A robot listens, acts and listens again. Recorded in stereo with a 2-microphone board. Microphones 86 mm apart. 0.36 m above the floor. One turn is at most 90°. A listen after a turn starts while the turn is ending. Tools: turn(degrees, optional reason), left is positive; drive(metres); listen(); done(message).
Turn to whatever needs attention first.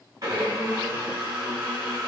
listen()
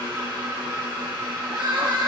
turn(degrees=-60, reason="The crying: about 60° right or 120° right.")
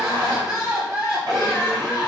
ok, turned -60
turn(degrees=-10, reason="So it is at 10° right.")
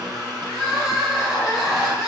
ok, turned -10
done("Facing the crying.")